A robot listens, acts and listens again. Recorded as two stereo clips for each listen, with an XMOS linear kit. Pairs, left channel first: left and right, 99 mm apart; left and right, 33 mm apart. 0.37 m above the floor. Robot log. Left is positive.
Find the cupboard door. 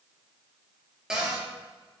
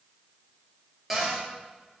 cmd yaw -30
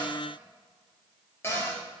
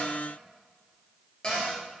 note: So it is at 25° left.
cmd yaw +25
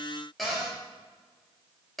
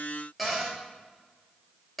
end: Found it: a cupboard door, straight ahead, 2 to 4 m away.